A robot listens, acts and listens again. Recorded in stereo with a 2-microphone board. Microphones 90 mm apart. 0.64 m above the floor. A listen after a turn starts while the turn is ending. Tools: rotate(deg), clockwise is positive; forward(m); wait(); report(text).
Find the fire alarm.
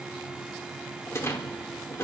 wait()
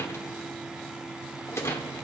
wait()
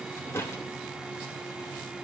report("I can't make out a fire alarm, only a rattle.")